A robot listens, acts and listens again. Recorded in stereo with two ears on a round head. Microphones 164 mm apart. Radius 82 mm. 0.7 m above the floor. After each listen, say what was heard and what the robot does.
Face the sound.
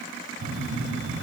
The phone buzzing: about 70° right or 110° right. Turn 70° right.
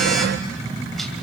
Found it: a phone buzzing, straight ahead.